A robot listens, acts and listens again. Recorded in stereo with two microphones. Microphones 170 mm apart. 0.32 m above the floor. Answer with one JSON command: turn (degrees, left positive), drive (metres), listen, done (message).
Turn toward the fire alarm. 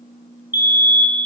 {"turn": -30}
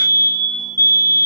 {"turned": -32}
{"turn": 20}
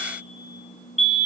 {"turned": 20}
{"done": "Found it: a fire alarm, straight ahead."}